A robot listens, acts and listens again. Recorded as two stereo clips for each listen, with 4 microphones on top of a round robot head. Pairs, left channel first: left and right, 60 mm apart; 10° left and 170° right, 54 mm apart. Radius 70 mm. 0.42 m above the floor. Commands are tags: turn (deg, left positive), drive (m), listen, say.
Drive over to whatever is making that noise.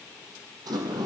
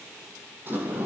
<turn deg="-115"/>
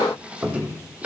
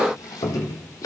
<turn deg="-20"/>
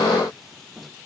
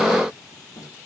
<drive m="1.0"/>
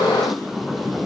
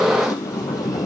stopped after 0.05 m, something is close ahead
<say>Blocked. The sliding door is further on, straight ahead.</say>